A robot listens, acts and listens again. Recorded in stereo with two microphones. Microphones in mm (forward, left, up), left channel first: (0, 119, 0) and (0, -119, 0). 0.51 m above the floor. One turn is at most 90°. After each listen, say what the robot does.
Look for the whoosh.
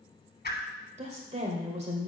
Turn 40° left.
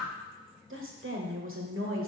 Found it: a whoosh, straight ahead, 1 to 2 m away.